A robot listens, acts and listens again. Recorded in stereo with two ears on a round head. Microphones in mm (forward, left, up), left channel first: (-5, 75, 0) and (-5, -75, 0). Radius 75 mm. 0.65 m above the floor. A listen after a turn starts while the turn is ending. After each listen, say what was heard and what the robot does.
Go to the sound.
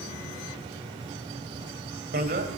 The bicycle bell: about 55° right or 125° right. Turn 55° right.
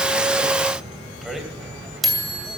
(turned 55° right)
Drive 1.0 m forward.
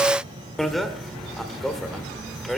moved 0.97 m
Drive 1.0 m forward.
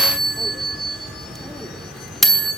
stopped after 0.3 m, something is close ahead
Arrived at the bicycle bell, straight ahead.